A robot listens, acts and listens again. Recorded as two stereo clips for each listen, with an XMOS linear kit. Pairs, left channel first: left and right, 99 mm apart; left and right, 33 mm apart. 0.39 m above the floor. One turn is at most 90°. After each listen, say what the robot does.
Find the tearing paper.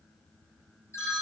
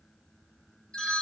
Keep listening.
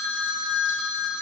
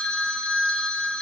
Keep listening.
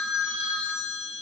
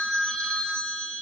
I can't make out tearing paper, only a phone ringing.